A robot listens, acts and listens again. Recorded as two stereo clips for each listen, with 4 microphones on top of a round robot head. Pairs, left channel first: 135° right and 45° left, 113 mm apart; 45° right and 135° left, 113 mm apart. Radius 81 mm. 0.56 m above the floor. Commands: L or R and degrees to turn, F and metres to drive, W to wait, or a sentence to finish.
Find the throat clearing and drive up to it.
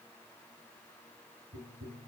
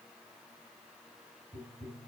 W
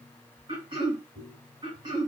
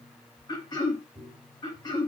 F1.0
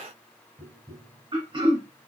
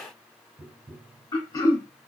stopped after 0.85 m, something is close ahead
I am next to the throat clearing.